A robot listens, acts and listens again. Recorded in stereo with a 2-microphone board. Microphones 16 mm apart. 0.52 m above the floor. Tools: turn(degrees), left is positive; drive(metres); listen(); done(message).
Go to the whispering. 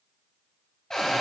listen()
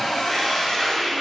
turn(degrees=30)
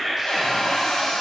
turn(degrees=-25)
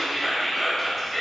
drive(metres=1.0)
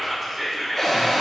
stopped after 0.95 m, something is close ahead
done("I am next to the whispering.")